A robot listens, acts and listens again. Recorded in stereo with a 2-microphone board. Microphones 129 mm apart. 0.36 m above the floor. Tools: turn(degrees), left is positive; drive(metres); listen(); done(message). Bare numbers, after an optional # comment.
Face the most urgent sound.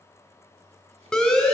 turn(30)
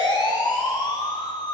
# So it is at 145° left.
turn(145)
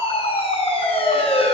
# The siren is now 50° left.
turn(50)
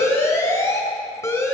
# The siren is now 25° left.
turn(25)
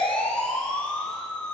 # The siren is now 10° left.
turn(10)
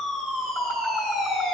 done("Facing the siren.")